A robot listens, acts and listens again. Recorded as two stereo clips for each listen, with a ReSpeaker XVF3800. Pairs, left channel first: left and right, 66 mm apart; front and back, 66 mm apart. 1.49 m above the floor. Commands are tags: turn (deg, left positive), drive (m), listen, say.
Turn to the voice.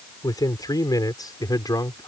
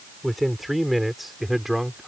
<turn deg="95"/>
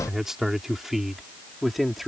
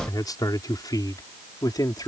<say>Facing the man speaking.</say>